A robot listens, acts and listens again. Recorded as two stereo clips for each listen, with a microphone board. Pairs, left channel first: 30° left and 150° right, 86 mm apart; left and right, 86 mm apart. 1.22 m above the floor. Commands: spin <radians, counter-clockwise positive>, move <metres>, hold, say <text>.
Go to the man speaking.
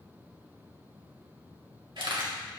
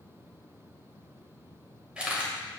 hold
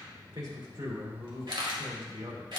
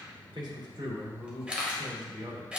spin -2.09
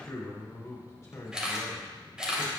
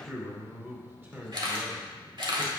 spin -0.35
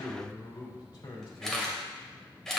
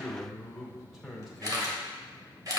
move 1.0
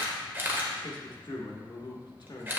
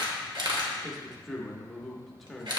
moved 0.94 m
move 1.0
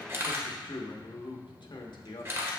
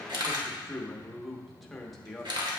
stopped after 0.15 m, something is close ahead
say Arrived at the man speaking, straight ahead.